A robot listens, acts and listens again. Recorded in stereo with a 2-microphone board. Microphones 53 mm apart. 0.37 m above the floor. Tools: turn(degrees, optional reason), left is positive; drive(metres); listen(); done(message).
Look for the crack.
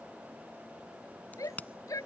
turn(degrees=30, reason="The crack: about 30° left or 150° left.")
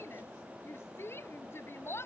listen()
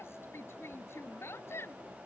done("I heard a crack, but can't make it out now. It was about straight ahead or 120° left.")